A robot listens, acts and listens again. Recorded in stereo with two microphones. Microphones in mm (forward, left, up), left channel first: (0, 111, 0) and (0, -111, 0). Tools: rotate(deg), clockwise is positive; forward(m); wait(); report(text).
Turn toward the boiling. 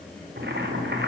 rotate(50)
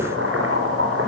rotate(75)
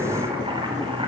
rotate(25)
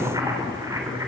rotate(15)
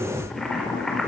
report("Found it: boiling, straight ahead, over 4 m away.")